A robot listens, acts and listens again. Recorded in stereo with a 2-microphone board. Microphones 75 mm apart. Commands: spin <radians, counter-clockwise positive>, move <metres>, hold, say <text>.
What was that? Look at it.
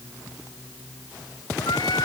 spin 1.57
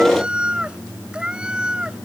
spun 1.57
spin -0.17
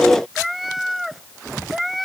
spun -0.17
say Found it: a cat meowing, straight ahead.